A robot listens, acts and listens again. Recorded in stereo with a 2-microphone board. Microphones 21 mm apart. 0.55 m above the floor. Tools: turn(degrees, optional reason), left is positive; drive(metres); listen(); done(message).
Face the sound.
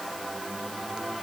listen()
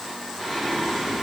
turn(degrees=40, reason="The singing: about 40° left or 140° left.")
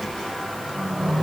turn(degrees=105, reason="So it is at 105° left.")
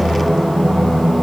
done("Found it: singing, straight ahead.")